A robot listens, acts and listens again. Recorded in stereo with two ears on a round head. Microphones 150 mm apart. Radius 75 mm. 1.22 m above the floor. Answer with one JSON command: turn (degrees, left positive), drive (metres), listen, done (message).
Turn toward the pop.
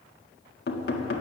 {"listen": true}
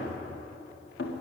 {"listen": true}
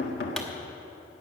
{"turn": 30}
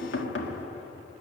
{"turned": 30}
{"listen": true}
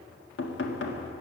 {"done": "I heard a pop, but can't make it out now. It was about 25° right or 145° left."}